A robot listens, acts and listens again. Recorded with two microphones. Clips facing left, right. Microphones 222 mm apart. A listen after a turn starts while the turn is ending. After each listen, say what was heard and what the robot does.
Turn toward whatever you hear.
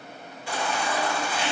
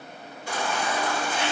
The baby crying: about 45° right or 135° right. Turn 45° right.
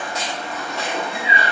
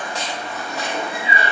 Facing the baby crying.